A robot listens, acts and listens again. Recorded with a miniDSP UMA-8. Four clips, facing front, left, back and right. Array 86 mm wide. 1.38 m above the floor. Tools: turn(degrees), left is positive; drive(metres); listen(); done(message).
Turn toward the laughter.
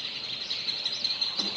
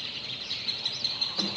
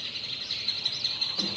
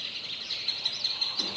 listen()
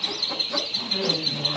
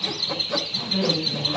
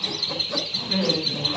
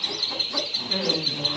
turn(degrees=-150)
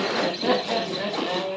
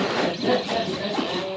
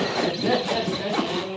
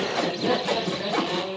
turn(degrees=-10)
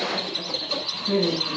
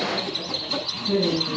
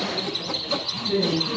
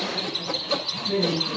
done("Facing the laughter, over 4 m away.")